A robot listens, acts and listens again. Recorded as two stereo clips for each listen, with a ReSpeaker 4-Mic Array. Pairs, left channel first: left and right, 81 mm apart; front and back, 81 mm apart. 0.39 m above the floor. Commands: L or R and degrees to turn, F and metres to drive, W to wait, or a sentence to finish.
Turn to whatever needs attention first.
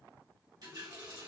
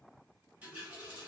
W
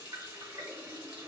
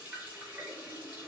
W
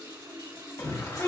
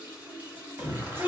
L125
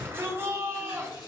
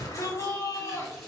R35
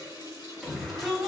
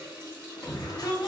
Found it: a shout, straight ahead.